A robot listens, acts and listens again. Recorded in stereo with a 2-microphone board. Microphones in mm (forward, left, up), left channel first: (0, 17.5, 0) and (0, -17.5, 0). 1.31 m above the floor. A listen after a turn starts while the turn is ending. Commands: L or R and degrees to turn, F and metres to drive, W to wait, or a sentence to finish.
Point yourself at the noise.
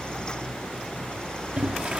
R30
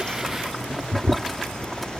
Facing the boiling.